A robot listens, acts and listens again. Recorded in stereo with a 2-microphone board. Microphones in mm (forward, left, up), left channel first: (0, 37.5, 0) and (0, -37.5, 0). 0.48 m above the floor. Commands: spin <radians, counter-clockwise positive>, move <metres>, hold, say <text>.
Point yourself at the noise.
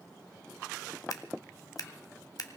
spin 1.05
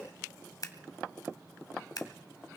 spin 1.05
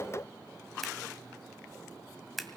say Found it: scissors, straight ahead.